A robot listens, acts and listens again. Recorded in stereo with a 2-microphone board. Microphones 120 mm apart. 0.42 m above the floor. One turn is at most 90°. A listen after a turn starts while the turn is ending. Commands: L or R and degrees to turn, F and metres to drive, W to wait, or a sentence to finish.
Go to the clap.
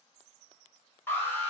W
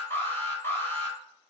W
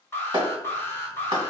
R40
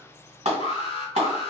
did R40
R90
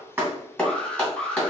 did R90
L10
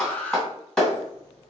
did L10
F1.0
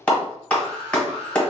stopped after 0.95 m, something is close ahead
L10
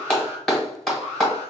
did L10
I am next to the clap.